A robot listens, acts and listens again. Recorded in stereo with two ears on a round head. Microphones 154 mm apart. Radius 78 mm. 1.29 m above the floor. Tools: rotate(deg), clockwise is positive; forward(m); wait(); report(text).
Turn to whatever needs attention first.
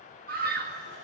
rotate(60)
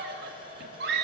rotate(60)
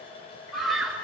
report("Facing the scream.")